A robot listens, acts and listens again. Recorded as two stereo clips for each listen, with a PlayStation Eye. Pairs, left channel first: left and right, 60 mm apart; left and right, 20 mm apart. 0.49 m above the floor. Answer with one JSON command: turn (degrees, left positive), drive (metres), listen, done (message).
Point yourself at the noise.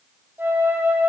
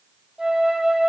{"turn": -30}
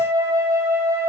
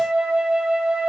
{"turn": -120}
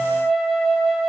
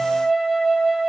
{"done": "Facing the flute."}